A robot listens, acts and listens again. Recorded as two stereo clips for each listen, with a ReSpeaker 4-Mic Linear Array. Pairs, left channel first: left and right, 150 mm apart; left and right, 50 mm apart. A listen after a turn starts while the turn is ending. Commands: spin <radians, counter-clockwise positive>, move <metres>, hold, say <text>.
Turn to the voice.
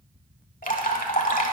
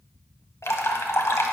hold
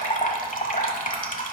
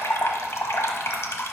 hold
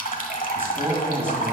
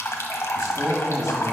spin -0.26
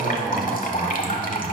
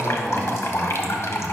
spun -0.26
hold
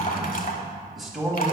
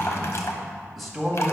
say Facing the man speaking, 1 to 2 m away.